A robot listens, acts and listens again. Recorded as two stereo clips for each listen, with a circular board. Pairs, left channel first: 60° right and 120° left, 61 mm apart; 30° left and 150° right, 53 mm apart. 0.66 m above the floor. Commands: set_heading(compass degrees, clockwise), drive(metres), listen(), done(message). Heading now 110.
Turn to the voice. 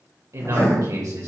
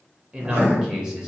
set_heading(340)
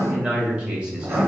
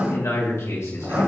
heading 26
set_heading(341)
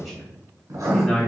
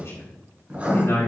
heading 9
set_heading(344)
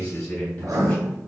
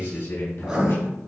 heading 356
set_heading(346)
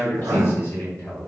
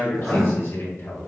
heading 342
done("Found it: a man speaking, straight ahead, over 4 m away.")